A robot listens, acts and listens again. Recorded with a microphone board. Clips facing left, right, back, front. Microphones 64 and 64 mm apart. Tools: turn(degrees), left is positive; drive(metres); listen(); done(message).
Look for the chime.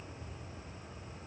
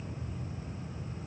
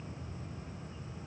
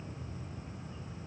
listen()
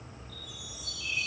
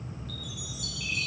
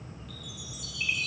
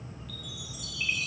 turn(degrees=-90)
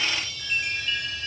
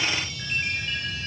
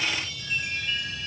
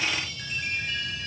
turn(degrees=-30)
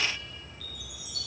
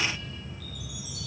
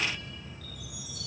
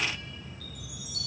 done("Found it: a chime, straight ahead.")